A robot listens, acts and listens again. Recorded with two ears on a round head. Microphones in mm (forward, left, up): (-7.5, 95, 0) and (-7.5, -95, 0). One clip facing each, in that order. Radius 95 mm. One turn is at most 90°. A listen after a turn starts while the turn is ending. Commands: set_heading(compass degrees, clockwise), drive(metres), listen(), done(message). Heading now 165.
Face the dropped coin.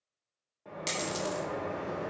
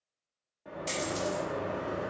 set_heading(90)
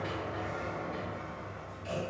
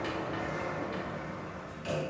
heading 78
listen()
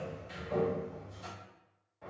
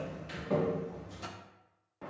done("I heard a dropped coin, but can't make it out now. It was about 10° right or 20° left.")